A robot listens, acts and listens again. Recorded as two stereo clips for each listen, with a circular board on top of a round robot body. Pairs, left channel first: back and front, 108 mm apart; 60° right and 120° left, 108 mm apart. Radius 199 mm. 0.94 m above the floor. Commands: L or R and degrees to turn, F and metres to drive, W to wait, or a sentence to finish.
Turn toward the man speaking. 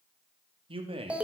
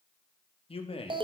R30
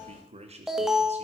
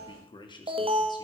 R15
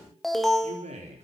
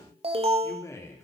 Found it: a man speaking, straight ahead, 2 to 4 m away.